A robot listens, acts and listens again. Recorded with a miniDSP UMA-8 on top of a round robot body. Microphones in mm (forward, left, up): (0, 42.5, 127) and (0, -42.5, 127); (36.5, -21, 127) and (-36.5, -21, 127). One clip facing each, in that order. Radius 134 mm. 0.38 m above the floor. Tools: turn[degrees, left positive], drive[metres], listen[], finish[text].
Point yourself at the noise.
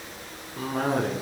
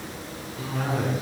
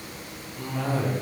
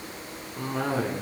Thought: The cough: 135° left.
Action: turn[135]
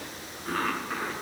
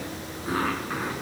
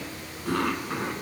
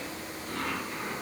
Thought: The cough is now 10° right.
Action: turn[-10]
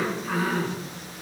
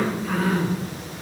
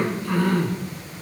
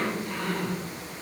Action: finish[Found it: a cough, straight ahead, over 4 m away.]